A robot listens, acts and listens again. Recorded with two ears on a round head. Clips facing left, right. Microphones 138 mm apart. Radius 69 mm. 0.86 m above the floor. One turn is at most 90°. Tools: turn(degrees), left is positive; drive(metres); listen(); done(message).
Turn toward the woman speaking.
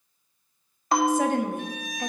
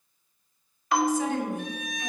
turn(degrees=45)
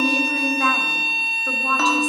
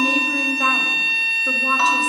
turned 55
done("Facing the woman speaking.")